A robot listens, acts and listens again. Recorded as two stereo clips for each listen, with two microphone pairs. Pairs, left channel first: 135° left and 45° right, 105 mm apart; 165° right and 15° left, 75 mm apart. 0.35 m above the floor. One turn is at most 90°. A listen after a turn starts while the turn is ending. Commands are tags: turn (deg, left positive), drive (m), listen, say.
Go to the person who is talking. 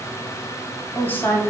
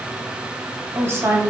<turn deg="70"/>
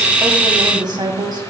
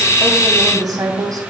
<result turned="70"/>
<drive m="1.0"/>
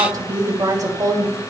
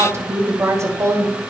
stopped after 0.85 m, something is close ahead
<turn deg="-10"/>
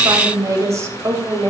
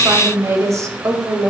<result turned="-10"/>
<say>Arrived at the woman speaking, straight ahead.</say>